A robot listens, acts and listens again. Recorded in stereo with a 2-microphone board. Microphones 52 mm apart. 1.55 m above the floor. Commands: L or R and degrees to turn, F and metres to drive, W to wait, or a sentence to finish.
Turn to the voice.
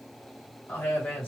L40
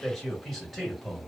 Found it: a man speaking, straight ahead, 1 to 2 m away.